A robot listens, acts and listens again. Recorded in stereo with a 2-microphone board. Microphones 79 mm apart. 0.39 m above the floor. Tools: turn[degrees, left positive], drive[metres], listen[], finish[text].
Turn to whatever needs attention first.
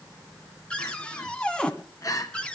Thought: The crying: about 45° left or 135° left.
Action: turn[45]
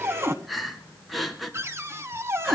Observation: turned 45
Action: finish[Found it: crying, straight ahead.]